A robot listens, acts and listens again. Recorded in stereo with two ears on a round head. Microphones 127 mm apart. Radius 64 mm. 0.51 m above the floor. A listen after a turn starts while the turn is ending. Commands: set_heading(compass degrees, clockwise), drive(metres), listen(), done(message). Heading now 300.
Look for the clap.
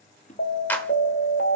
set_heading(270)
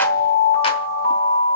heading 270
listen()
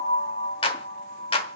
set_heading(135)
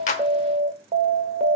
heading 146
set_heading(136)
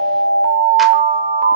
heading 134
listen()
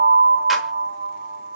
done("Facing where the clap came from. I can't hear it now.")